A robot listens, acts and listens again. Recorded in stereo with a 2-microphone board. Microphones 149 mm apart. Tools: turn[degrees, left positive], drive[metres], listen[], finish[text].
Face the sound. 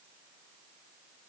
Action: listen[]
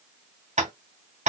Thought: The tapping: about 50° right or 130° right.
Action: turn[-50]
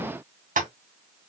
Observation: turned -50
Thought: So it is at 75° right.
Action: turn[-75]
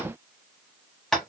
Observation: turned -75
Action: finish[Found it: tapping, straight ahead.]